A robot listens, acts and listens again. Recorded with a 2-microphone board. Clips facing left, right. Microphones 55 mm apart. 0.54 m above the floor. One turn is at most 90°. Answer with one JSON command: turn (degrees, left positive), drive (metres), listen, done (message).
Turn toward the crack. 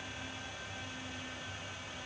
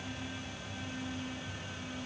{"listen": true}
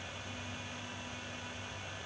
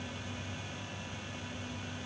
{"listen": true}
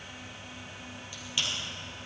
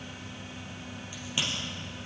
{"turn": -20}
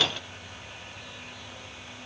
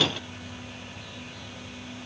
{"listen": true}
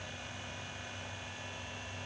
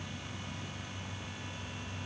{"done": "I heard a crack, but can't make it out now. It was about straight ahead or 140° right."}